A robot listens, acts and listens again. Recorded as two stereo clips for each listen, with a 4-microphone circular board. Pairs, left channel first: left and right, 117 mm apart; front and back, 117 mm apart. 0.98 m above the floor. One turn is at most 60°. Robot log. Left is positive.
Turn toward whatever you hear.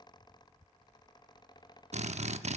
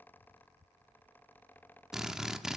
note: The drill: 95° right.
cmd yaw -60
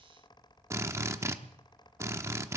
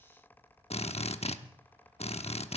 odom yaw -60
note: The drill is now 25° right.
cmd yaw -25
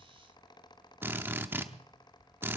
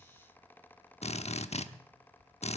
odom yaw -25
note: The drill is now 20° right.
cmd yaw -20
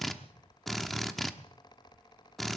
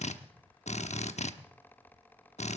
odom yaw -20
end: Found it: a drill, straight ahead, under 1 m away.